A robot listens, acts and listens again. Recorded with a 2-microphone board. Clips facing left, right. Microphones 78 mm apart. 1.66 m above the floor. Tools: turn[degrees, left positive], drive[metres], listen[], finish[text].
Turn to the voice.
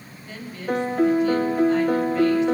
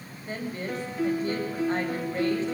Thought: The woman speaking: about 35° right or 145° right.
Action: turn[-35]
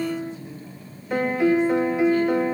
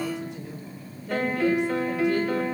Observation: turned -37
Action: listen[]
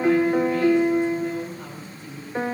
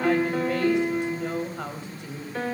Thought: So it is at 110° right.
Action: turn[-110]
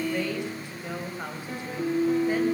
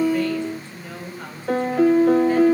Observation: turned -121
Thought: The woman speaking is now 15° left.
Action: turn[15]
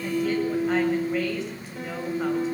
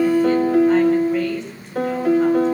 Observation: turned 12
Action: listen[]
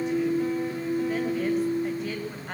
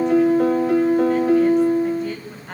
Action: finish[Found it: a woman speaking, straight ahead, over 4 m away.]